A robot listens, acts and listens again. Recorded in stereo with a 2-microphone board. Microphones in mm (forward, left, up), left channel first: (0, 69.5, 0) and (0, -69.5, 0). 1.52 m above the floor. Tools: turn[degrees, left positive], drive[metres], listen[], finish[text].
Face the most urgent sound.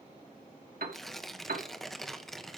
Action: listen[]
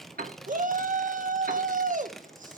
Thought: The shout: about 65° right or 115° right.
Action: turn[-65]
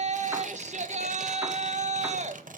Thought: So it is at 50° right.
Action: turn[-50]
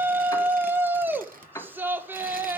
Thought: The shout is now 15° right.
Action: turn[-15]
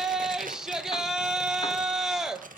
Action: finish[Found it: a shout, straight ahead, 1 to 2 m away.]